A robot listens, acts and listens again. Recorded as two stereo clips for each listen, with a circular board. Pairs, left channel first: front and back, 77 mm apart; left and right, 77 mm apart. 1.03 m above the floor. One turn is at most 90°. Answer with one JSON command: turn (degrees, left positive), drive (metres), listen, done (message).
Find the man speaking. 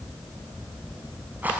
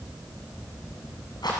{"listen": true}
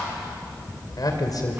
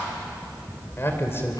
{"turn": 35}
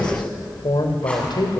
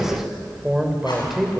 {"done": "Facing the man speaking, 2 to 4 m away."}